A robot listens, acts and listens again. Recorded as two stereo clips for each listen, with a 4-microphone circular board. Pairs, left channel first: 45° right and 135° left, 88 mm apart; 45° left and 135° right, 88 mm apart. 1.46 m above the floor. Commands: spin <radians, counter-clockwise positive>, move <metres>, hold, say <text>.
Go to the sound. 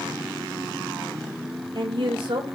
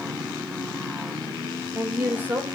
spin 2.71
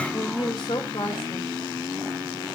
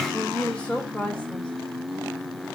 spin -0.52
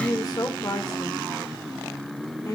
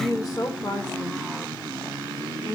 move 1.0
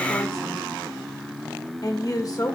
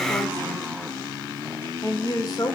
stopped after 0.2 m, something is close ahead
say Something is in my way. I am facing the woman speaking but have not reached it.